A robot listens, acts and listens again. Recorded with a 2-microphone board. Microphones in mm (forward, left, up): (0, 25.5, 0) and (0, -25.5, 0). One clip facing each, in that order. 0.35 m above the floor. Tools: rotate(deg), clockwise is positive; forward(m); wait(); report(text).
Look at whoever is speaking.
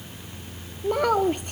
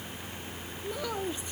rotate(-50)
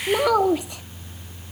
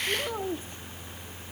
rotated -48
rotate(-80)
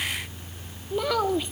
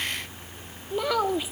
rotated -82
report("Found it: a child speaking, straight ahead.")